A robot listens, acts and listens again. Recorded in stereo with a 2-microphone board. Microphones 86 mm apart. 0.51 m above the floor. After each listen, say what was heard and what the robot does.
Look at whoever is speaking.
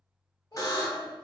The child speaking: about 55° left or 125° left. Turn 55° left.
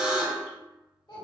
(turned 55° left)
So it is at 70° left. Turn 70° left.
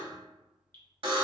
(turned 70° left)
Keep listening.
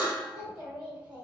The child speaking is now 15° right. Turn 15° right.
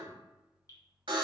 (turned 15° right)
Keep listening.
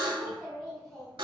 Facing the child speaking, 1 to 2 m away.